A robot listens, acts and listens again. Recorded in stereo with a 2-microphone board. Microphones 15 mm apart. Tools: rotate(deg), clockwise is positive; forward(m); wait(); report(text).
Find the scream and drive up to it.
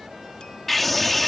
rotate(-30)
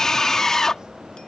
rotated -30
rotate(-145)
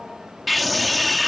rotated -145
forward(1.0)
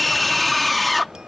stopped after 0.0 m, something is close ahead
report("Something is in my way. I am facing the scream but have not reached it.")